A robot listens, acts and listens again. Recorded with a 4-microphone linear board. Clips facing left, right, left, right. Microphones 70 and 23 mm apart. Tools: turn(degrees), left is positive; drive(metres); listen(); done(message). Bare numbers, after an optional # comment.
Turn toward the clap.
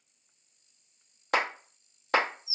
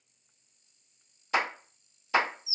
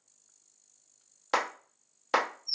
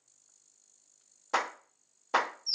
# The clap: about 60° left or 120° left.
turn(60)
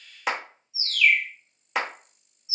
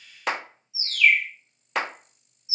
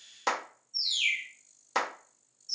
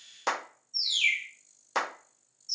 done("Found it: a clap, straight ahead.")